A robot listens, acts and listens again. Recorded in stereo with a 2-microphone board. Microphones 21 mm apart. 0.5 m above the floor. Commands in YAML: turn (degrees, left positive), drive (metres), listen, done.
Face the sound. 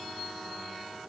listen: true
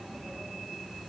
listen: true
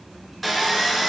turn: 30
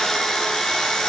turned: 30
turn: 150
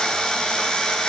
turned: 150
turn: 35
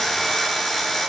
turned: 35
done: "Facing the sawing."